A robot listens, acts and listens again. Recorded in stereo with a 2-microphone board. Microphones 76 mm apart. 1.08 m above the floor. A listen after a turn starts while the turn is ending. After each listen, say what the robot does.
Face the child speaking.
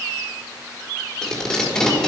Keep listening.
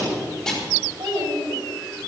Turn 90° right.
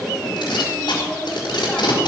Keep listening.
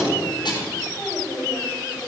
Turn 15° left.
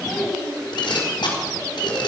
Found it: a child speaking, straight ahead, over 4 m away.